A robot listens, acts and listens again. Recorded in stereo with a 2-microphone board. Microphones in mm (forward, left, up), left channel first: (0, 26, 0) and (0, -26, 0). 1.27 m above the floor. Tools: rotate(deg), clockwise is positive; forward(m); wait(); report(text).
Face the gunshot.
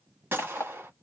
rotate(40)
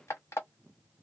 wait()
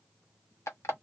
report("I heard a gunshot, but can't make it out now. It was about straight ahead or 100° right.")